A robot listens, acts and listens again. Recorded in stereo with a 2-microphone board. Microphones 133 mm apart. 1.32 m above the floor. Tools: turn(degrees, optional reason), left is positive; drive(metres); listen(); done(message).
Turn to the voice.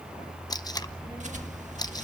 turn(degrees=-30, reason="The child speaking: about 30° right or 150° right.")
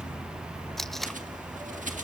listen()
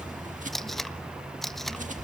done("Found it: a child speaking, straight ahead.")